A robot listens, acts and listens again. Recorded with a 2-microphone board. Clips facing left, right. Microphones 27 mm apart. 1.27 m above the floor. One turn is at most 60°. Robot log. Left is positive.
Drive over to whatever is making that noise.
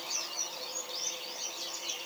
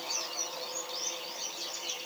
cmd idle
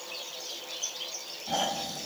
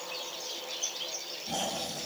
note: The snoring: about 25° left or 155° left.
cmd yaw +25
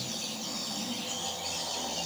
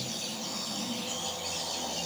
cmd fwd 1.0
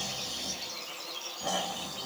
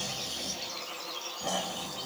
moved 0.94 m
cmd fwd 1.0
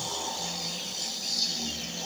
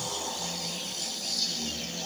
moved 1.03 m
note: The snoring is now 10° left.
cmd yaw +10
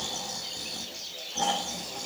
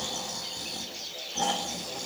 cmd fwd 1.0
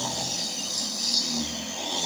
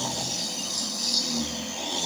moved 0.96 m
cmd fwd 1.0
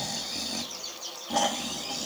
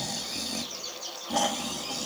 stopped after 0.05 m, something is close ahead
end: I am next to the snoring.